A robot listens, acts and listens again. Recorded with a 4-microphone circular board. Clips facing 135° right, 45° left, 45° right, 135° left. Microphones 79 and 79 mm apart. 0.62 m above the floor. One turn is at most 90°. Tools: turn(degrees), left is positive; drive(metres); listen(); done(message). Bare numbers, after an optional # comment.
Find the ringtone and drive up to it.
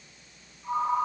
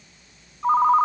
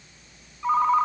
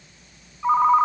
# The ringtone: 60° left.
turn(60)
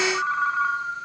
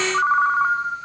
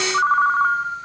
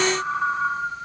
# The ringtone is now 10° right.
turn(-10)
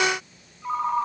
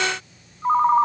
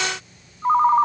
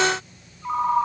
drive(1.0)
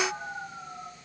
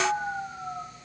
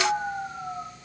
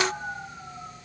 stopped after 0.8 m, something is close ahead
done("Blocked. The ringtone is further on, straight ahead.")